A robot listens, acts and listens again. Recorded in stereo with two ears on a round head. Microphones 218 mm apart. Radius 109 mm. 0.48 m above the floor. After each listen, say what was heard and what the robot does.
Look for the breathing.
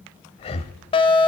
The breathing: about 25° left or 155° left. Turn 25° left.
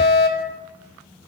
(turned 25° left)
Keep listening.
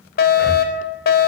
Keep listening.
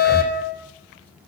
Facing the breathing, 1 to 2 m away.